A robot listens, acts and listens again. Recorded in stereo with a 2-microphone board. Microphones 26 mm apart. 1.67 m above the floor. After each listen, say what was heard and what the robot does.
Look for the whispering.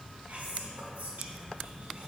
The whispering: about 65° right or 115° right. Turn 65° right.
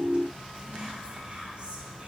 So it is at 40° right. Turn 40° right.
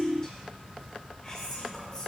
The whispering is now 25° left. Turn 25° left.
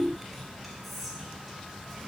Found it: whispering, straight ahead, 1 to 2 m away.